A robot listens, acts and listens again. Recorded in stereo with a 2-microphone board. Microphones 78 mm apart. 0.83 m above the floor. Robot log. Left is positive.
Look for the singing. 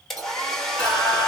note: The singing: about 30° right or 150° right.
cmd yaw -30
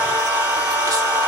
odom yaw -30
note: So it is at 120° right.
cmd yaw -120
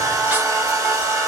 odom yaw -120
note: The singing is now 15° right.
cmd yaw -15
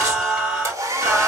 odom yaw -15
note: The singing is now 10° right.
cmd yaw -10
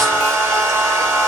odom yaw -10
end: Found it: singing, straight ahead.